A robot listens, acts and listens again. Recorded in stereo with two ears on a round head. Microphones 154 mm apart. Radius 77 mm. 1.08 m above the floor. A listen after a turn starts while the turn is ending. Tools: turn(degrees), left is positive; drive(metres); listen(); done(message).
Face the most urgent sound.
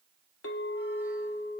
listen()
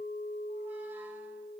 listen()
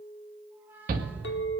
turn(degrees=-55)
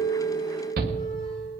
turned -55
turn(degrees=-65)
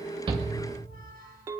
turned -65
listen()
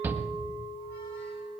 turn(degrees=-15)
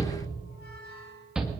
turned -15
done("Facing the shout.")